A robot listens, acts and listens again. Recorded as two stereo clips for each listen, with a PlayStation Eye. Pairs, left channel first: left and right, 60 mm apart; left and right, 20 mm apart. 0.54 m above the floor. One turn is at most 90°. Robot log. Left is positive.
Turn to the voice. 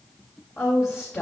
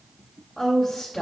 note: The woman speaking: about 50° left or 130° left.
cmd yaw +50
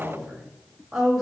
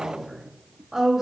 end: Facing the woman speaking.